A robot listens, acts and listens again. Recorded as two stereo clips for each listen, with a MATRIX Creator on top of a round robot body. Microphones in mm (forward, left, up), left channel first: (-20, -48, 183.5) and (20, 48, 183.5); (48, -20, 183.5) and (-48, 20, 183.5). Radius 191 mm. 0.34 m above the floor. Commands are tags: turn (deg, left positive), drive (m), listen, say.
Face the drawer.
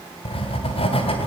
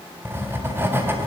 <listen/>
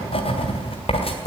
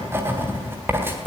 <listen/>
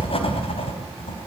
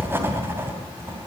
<say>I can't make out a drawer, only writing.</say>